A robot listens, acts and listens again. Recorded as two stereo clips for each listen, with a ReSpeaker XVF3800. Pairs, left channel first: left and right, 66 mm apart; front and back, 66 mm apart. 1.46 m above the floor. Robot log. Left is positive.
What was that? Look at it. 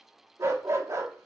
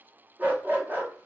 note: The dog barking: 125° right.
cmd yaw -125
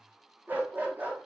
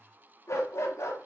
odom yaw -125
note: The dog barking is now 30° right.
cmd yaw -30
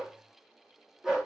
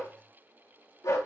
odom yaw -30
note: The dog barking is now 10° right.
cmd yaw -10
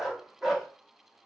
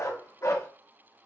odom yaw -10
end: Facing the dog barking, 1 to 2 m away.